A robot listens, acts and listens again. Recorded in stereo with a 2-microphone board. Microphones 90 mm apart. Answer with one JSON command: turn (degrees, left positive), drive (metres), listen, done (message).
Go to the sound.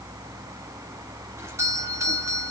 {"turn": -35}
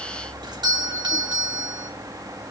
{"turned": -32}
{"turn": -110}
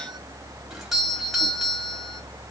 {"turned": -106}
{"drive": 1.0}
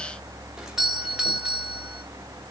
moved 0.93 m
{"turn": -10}
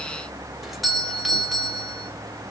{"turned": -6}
{"drive": 1.0}
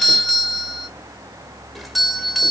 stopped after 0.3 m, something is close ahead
{"done": "Arrived at the doorbell, straight ahead."}